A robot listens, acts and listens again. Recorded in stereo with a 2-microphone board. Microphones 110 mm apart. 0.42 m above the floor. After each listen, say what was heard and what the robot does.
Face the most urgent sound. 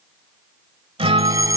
The fire alarm: about 30° right or 150° right. Turn 30° right.
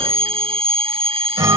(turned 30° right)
So it is at 115° right. Turn 115° right.
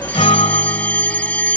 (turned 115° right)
The fire alarm is now 15° left. Turn 15° left.
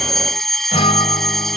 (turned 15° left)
Found it: a fire alarm, straight ahead.